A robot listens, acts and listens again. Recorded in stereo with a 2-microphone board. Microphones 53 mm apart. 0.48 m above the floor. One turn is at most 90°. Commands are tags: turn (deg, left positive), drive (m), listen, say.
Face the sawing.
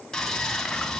<turn deg="30"/>
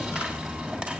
<turn deg="-20"/>
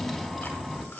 <say>Facing the sawing, 2 to 4 m away.</say>